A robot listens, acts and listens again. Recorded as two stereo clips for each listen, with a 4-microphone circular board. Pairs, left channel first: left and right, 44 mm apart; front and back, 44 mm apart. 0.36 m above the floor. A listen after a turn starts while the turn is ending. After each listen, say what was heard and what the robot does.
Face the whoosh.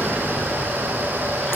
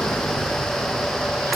Keep listening.
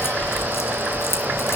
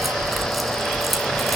Keep listening.
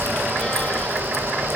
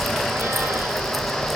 I can't make out a whoosh.